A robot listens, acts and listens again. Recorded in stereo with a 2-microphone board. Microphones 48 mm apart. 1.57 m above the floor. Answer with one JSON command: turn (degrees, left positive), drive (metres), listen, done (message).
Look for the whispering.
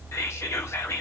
{"turn": 90}
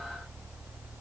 {"listen": true}
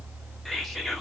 {"done": "Facing the whispering, under 1 m away."}